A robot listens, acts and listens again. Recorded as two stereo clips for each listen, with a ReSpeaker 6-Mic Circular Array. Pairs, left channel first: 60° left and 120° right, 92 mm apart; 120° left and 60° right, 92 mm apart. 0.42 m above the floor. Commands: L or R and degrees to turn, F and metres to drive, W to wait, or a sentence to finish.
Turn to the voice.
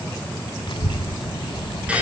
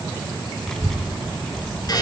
L35
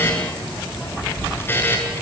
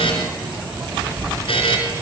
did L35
Found it: a child speaking, straight ahead, 1 to 2 m away.